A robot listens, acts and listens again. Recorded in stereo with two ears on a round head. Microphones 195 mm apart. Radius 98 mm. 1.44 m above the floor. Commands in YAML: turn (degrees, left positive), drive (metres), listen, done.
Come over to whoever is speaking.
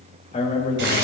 turn: 30
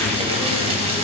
listen: true
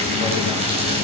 listen: true
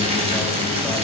done: "I heard a man speaking, but can't make it out now. It was about straight ahead or 120° left. I did not reach it."